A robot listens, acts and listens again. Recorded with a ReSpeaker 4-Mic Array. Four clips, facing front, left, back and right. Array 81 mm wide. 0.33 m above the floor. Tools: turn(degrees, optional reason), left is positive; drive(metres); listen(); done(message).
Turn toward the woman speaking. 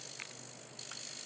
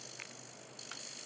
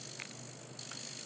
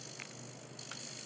listen()
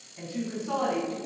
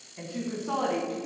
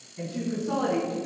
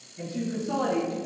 turn(degrees=75, reason="The woman speaking: 75° left.")
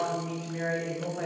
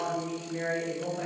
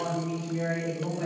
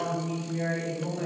done("Found it: a woman speaking, straight ahead, 2 to 4 m away.")